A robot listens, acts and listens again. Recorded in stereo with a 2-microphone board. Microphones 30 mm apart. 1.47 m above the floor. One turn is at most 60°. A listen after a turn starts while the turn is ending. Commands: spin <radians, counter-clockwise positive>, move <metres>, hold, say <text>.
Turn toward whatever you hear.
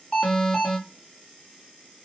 spin 0.52
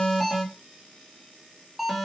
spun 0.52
say Facing the alarm, over 4 m away.